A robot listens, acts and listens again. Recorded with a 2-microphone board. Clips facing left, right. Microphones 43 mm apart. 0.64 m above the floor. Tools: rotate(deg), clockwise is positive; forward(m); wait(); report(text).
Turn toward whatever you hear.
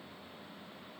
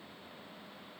wait()
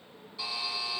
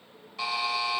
rotate(60)
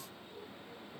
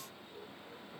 wait()
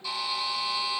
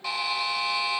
rotate(60)
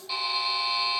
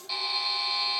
rotate(-10)
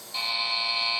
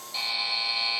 report("Found it: a buzzer, straight ahead.")